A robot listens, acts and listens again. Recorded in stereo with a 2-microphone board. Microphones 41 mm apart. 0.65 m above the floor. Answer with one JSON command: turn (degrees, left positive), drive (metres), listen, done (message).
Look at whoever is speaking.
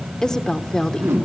{"turn": 15}
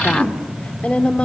{"turn": 150}
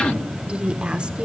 {"turn": -30}
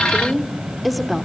{"done": "Facing the woman speaking."}